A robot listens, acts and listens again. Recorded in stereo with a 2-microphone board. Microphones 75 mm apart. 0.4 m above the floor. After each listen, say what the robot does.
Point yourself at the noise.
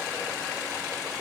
Keep listening.
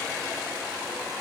Keep listening.
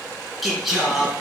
Turn 30° right.
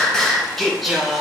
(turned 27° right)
Turn 30° right.
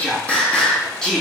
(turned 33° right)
Turn 10° left.
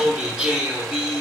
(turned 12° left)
Turn 15° right.
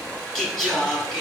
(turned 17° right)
Found it: singing, straight ahead.